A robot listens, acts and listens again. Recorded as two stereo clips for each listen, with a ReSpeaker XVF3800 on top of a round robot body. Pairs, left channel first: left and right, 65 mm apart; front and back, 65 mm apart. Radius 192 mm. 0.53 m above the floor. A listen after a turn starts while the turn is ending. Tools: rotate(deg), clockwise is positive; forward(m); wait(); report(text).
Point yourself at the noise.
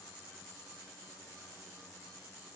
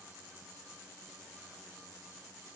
wait()
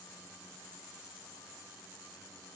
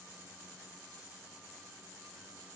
wait()
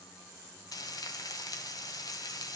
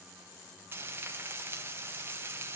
rotate(-120)
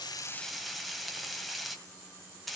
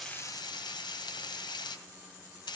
report("Found it: frying, straight ahead.")